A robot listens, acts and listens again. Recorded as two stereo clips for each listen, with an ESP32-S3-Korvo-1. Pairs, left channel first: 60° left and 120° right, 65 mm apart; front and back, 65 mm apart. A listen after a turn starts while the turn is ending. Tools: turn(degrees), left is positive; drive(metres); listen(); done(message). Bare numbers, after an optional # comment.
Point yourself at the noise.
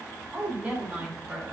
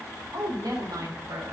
# The woman speaking: 165° left.
turn(165)
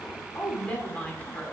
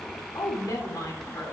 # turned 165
# The woman speaking is now 20° right.
turn(-20)
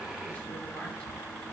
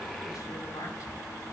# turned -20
listen()
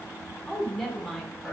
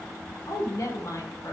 # The woman speaking is now 30° right.
turn(-30)
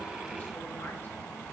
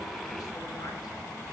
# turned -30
listen()
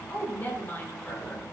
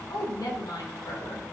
done("Found it: a woman speaking, straight ahead.")